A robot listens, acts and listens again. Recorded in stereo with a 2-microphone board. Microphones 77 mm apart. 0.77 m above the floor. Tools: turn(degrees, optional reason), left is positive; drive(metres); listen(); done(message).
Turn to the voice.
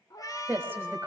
turn(degrees=-25, reason="The woman speaking: about 25° right or 155° right.")
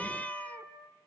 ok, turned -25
listen()
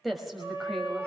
done("Found it: a woman speaking, straight ahead.")